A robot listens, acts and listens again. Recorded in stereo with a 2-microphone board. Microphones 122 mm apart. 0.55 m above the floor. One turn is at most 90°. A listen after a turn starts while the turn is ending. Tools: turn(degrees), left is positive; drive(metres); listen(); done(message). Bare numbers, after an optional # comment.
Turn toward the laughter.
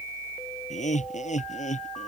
turn(90)
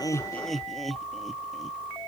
done("Found it: laughter, straight ahead.")